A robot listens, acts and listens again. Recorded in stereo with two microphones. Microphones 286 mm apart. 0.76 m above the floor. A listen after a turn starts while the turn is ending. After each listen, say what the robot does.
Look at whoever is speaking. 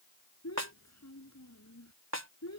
Turn 65° left.
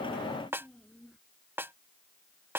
Facing the child speaking.